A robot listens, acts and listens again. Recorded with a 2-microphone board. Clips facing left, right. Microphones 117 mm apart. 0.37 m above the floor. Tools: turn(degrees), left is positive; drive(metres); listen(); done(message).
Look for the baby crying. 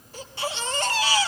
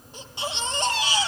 turn(degrees=-20)
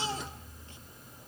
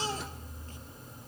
turn(degrees=-140)
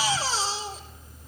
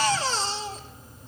done("Facing the baby crying, 2 to 4 m away.")